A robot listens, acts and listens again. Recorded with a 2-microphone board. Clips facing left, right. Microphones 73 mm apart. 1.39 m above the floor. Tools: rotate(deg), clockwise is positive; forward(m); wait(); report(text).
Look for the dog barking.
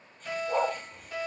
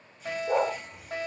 rotate(90)
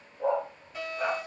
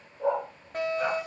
rotate(15)
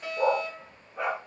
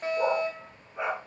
rotate(10)
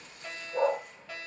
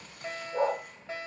report("Facing the dog barking, over 4 m away.")